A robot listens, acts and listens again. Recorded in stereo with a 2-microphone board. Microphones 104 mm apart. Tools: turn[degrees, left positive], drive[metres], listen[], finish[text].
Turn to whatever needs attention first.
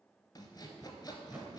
Action: listen[]
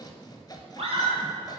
Thought: The scream: about 70° right or 110° right.
Action: turn[-70]
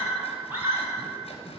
Thought: So it is at 20° right.
Action: turn[-20]
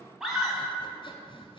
Action: finish[Found it: a scream, straight ahead, 2 to 4 m away.]